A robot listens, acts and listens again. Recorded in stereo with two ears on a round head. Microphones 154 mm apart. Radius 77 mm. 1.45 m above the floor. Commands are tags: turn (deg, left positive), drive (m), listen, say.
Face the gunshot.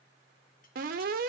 <listen/>
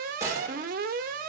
<turn deg="-15"/>
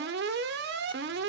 <listen/>
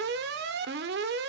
<say>I heard a gunshot, but can't make it out now. It was about straight ahead or 150° right.</say>